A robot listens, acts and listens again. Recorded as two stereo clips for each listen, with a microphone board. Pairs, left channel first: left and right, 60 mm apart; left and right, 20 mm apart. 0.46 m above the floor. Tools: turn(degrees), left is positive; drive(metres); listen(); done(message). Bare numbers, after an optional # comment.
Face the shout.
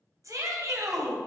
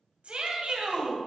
# The shout: about 65° right or 115° right.
turn(-65)
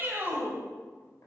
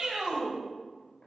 # So it is at 35° right.
turn(-35)
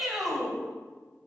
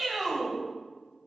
done("Found it: a shout, straight ahead, 2 to 4 m away.")